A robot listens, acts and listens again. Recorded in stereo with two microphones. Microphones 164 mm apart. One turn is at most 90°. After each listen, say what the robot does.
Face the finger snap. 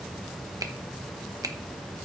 Turn 20° right.
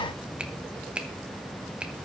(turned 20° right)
Facing the finger snap, 1 to 2 m away.